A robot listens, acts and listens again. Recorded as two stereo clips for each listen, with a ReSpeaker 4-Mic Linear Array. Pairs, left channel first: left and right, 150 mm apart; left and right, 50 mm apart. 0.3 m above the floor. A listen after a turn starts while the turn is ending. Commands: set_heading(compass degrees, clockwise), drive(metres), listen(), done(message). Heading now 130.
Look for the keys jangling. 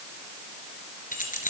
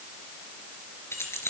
set_heading(70)
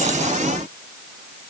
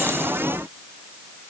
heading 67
listen()
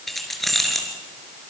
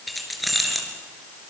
done("Facing the keys jangling.")